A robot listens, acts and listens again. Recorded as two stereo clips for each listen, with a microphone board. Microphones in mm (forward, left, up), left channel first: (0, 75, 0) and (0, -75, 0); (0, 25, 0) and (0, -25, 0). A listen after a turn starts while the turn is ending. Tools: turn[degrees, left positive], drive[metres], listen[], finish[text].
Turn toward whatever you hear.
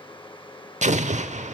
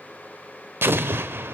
Thought: The explosion: about 60° right or 120° right.
Action: turn[-60]
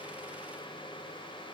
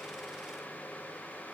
Action: listen[]
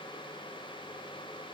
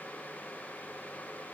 Action: finish[I heard an explosion, but can't make it out now. It was about straight ahead or 60° right.]